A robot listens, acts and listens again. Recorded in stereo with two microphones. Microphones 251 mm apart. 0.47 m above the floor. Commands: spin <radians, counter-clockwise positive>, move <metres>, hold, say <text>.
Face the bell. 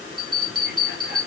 spin -1.05
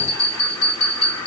spin -1.05
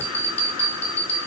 spin 0.44
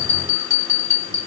spin 0.17
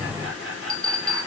say Facing the bell.